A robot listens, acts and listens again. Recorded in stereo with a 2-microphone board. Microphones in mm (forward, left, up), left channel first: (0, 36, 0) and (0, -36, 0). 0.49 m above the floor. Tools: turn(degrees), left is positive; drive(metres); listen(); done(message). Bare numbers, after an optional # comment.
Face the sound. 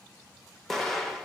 turn(30)
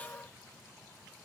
listen()
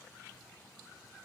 done("I heard an explosion, but can't make it out now. It was about 25° right or 145° left.")